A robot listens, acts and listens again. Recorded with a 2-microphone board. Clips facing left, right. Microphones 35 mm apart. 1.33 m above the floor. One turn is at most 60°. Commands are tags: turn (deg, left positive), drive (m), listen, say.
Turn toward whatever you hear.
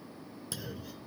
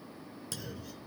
<turn deg="30"/>
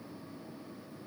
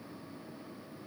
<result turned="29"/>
<listen/>
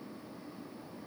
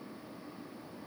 <say>I heard a clunk, but can't make it out now. It was about 20° right or 140° left.</say>